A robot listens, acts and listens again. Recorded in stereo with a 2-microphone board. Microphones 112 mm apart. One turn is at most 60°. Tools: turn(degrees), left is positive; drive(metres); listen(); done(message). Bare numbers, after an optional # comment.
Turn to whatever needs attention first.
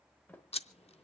listen()
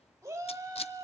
# The shout: about 25° right or 155° right.
turn(-25)
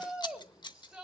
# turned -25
done("Facing the shout, 2 to 4 m away.")